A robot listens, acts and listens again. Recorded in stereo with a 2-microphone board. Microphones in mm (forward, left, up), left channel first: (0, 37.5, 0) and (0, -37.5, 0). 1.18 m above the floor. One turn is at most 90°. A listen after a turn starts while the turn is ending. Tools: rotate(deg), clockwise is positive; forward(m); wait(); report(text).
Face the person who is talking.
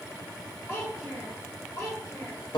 rotate(-40)
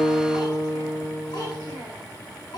rotate(-90)
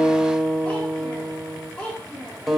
rotate(-10)
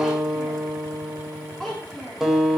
report("Facing the child speaking, 2 to 4 m away.")